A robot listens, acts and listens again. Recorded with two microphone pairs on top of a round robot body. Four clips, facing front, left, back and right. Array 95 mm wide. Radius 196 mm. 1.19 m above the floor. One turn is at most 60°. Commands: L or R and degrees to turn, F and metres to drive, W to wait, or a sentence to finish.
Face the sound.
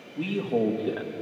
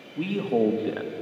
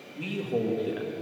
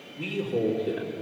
L60
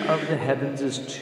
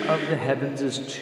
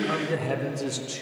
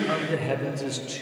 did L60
L50
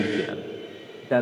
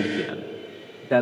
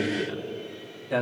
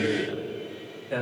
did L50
L35
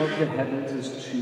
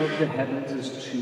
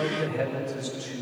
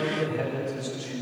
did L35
L25
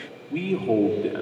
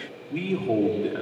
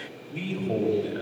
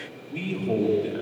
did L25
Facing the man speaking, 1 to 2 m away.